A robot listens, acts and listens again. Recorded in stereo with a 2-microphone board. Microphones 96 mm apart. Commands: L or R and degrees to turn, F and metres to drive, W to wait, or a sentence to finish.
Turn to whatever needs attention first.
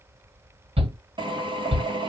R75
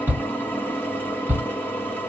R20
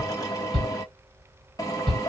Found it: a shout, straight ahead.